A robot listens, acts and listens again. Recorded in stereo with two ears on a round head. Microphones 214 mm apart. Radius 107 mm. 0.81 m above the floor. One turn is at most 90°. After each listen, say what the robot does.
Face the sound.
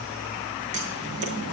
Turn 30° right.
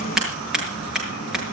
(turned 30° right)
Facing the scissors.